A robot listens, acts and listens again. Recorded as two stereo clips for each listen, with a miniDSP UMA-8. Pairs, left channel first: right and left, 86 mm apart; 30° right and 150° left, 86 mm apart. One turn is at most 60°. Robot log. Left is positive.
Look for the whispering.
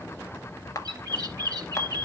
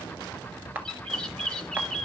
cmd idle
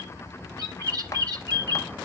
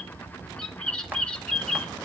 cmd idle
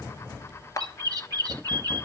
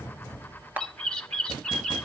end: I can't make out whispering, only a bird.